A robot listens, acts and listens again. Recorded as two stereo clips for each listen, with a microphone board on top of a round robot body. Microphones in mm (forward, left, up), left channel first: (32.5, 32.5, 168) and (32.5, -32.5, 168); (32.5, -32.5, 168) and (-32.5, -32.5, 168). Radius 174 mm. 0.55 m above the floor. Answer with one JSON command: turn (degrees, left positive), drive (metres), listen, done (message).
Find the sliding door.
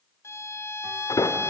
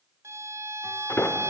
{"turn": 60}
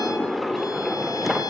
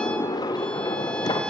{"done": "Facing the sliding door, 1 to 2 m away."}